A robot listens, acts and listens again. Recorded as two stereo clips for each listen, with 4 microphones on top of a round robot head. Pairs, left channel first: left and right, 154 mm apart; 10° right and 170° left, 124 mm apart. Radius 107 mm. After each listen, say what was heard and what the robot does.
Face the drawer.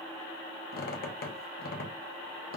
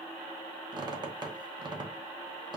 Keep listening.
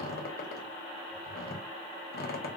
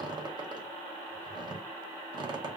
Keep listening.
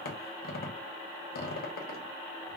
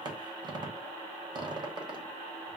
I can't make out a drawer to turn to.